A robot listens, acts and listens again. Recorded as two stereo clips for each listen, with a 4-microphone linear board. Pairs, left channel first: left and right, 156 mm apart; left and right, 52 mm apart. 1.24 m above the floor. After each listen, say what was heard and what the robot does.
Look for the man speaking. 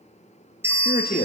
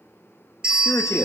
The man speaking: about 70° left or 110° left. Turn 70° left.
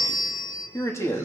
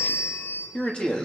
So it is at 15° left. Turn 15° left.
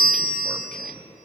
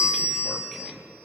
Facing the man speaking, 2 to 4 m away.